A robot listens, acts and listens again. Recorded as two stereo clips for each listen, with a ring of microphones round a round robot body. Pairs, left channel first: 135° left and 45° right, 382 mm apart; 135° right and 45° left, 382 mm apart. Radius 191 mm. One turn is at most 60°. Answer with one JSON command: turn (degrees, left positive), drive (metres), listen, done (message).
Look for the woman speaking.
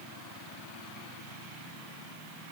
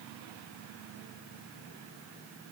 {"listen": true}
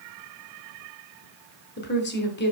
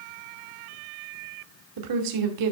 {"turn": 60}
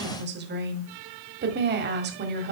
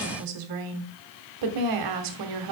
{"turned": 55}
{"turn": 15}
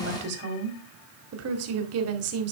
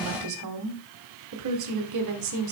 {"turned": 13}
{"done": "Found it: a woman speaking, straight ahead, 1 to 2 m away."}